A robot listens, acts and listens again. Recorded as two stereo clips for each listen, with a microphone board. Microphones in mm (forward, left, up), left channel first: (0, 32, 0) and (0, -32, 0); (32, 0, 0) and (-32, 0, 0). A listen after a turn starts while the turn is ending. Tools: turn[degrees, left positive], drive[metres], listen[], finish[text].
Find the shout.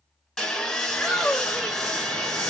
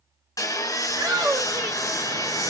Thought: The shout: 175° left.
Action: turn[175]
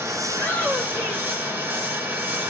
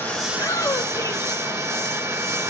Thought: The shout is now 25° left.
Action: turn[25]
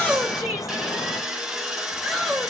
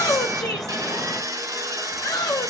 Action: finish[Facing the shout.]